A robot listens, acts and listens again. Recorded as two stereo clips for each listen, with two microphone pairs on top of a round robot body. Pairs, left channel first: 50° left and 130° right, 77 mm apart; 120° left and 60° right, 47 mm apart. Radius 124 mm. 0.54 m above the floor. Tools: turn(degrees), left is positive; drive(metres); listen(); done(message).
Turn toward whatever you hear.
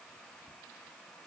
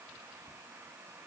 listen()
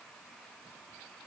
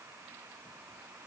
listen()
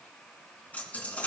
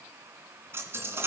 turn(degrees=-20)
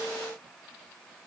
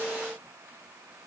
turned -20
done("I heard a dropped coin from this way, but can't make it out now.")